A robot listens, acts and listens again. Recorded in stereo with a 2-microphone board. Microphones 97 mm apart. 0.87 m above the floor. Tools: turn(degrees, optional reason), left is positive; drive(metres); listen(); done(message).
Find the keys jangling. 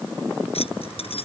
turn(degrees=90)
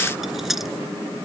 done("Found it: keys jangling, straight ahead.")